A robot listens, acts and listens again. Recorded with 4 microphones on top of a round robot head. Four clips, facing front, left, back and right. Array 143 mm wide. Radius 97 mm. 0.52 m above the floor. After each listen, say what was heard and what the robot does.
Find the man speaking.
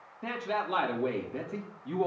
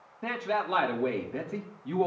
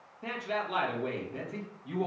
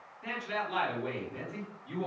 The man speaking: 90° left. Turn 90° left.
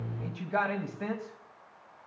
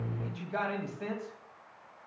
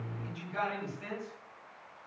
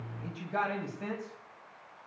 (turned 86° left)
The man speaking is now 10° left. Turn 10° left.
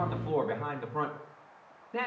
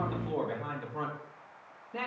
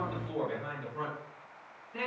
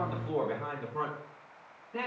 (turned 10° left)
The man speaking is now 10° left. Turn 10° left.
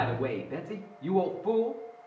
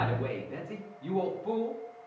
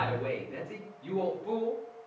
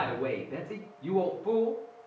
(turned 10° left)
Found it: a man speaking, straight ahead.